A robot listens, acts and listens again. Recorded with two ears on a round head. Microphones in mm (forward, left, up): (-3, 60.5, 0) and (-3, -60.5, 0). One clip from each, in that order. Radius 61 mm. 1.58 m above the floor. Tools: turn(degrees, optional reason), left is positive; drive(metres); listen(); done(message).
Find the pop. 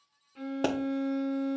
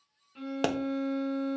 turn(degrees=-65, reason="The pop: about 65° right or 115° right.")
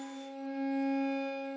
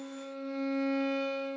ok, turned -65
listen()
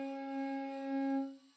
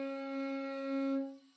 done("I heard a pop, but can't make it out now. It was about straight ahead or 50° right.")